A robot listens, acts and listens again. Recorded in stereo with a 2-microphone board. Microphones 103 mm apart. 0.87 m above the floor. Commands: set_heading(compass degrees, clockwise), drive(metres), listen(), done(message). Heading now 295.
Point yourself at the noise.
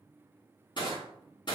set_heading(245)
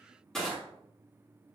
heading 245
done("Found it: crushing, straight ahead, 2 to 4 m away.")